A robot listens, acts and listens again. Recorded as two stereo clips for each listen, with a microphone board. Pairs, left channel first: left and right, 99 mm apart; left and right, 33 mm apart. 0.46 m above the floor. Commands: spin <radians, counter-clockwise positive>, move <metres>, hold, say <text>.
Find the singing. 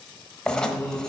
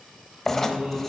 spin -0.87
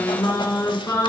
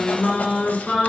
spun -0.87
spin 0.61
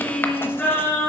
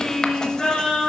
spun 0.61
spin 0.35
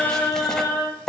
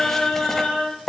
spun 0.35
spin 0.17
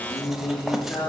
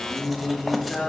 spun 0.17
spin 0.17
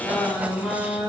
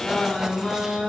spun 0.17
say Facing the singing, 2 to 4 m away.